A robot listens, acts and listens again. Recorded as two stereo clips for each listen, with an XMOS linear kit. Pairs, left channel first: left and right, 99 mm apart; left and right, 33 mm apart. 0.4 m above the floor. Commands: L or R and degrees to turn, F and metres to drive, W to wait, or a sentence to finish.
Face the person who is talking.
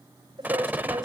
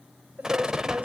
R50
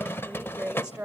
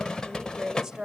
R15
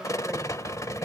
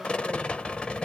W
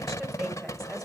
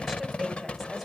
W
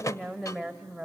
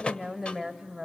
Found it: a woman speaking, straight ahead, 1 to 2 m away.